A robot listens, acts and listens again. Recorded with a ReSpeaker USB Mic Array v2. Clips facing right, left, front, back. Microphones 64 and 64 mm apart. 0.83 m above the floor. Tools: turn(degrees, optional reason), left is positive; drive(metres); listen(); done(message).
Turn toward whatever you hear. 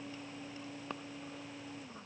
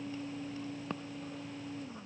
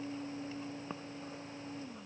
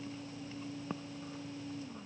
listen()
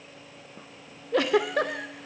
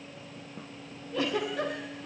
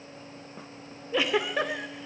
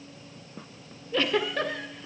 turn(degrees=-75, reason="The giggle: 75° right.")
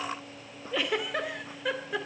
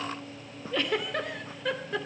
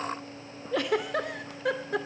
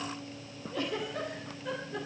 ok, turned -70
done("Facing the giggle, 2 to 4 m away.")